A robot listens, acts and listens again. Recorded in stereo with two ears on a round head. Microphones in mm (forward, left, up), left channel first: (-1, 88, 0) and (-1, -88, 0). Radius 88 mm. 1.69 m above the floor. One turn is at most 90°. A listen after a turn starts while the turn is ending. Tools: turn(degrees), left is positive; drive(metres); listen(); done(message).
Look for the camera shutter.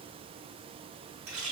listen()
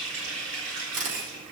turn(degrees=-40)
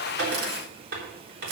turn(degrees=-90)
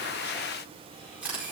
turn(degrees=-10)
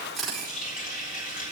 done("Facing the camera shutter.")